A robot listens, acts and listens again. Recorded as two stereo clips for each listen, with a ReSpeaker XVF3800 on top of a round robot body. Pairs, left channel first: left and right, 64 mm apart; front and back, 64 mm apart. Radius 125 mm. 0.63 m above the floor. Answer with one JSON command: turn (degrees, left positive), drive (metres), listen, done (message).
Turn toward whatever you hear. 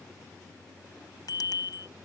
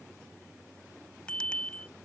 {"turn": 75}
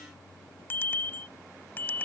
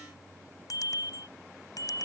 {"turn": 30}
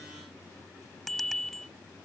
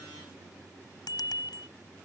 {"done": "Found it: a bicycle bell, straight ahead."}